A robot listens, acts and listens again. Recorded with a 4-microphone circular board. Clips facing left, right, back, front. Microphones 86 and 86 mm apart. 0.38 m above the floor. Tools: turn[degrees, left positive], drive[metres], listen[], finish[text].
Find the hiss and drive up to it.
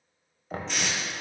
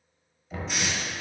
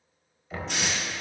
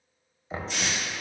Thought: The hiss: 170° right.
Action: turn[-170]
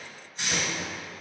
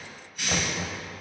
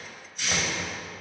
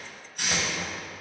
Thought: The hiss is now 30° left.
Action: turn[30]
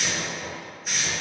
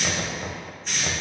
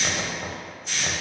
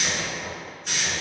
Thought: The hiss is now 10° left.
Action: turn[10]
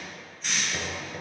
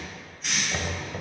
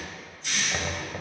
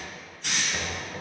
Action: drive[1.0]
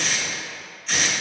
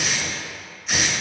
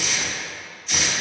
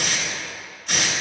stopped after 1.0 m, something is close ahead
Thought: The hiss is now 10° right.
Action: turn[-10]
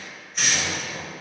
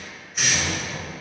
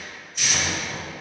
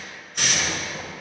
Action: finish[Arrived at the hiss, straight ahead.]